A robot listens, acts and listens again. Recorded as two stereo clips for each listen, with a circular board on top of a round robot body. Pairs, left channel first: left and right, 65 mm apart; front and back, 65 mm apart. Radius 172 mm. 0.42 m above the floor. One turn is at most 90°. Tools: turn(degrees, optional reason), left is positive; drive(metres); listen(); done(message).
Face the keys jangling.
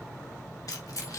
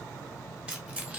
turn(degrees=90, reason="The keys jangling: 115° left.")
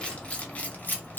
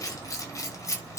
turn(degrees=35, reason="The keys jangling is now 35° left.")
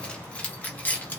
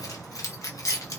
turn(degrees=30, reason="The keys jangling is now 30° left.")
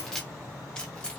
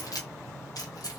turn(degrees=15, reason="The keys jangling is now 15° left.")
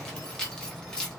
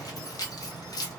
turn(degrees=10, reason="The keys jangling is now 10° left.")
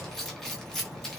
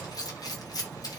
done("Found it: keys jangling, straight ahead, 1 to 2 m away.")